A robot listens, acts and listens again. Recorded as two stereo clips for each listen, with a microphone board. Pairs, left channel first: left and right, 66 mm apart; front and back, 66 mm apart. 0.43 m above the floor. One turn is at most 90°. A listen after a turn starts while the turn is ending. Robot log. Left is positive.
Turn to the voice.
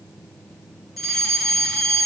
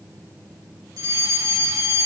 cmd idle
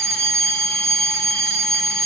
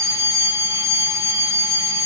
cmd idle
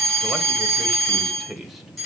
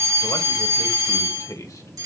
end: Found it: a man speaking, straight ahead.